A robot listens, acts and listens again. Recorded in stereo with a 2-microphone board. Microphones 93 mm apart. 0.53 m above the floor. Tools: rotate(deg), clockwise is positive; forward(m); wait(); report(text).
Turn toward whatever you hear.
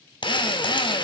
rotate(-60)
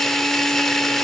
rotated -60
report("Found it: a drill, straight ahead.")